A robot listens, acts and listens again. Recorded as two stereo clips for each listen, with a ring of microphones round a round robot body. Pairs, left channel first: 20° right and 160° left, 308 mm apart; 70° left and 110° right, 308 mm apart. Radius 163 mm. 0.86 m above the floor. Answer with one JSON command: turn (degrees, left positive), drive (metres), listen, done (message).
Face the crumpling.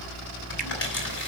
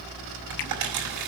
{"turn": -75}
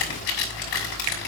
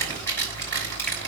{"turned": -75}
{"turn": -15}
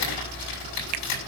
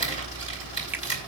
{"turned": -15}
{"done": "Found it: crumpling, straight ahead."}